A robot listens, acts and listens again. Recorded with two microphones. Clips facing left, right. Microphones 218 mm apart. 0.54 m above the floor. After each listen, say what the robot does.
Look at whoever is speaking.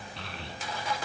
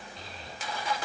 Turn 90° left.
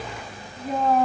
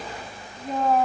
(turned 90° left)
Found it: a child speaking, straight ahead.